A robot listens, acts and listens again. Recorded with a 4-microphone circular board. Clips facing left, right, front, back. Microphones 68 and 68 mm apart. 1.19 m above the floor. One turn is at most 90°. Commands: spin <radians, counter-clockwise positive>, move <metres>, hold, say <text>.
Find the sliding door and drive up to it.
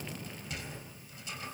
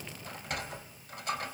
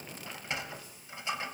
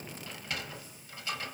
spin -1.13
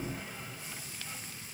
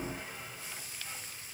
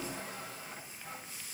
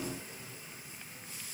move 1.0
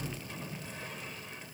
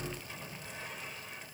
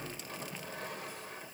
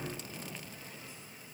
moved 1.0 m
move 1.0
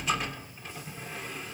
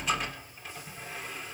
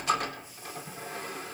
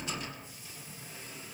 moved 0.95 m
move 1.0
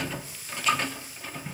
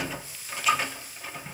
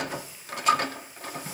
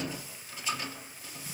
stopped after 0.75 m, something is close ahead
say I am next to the sliding door.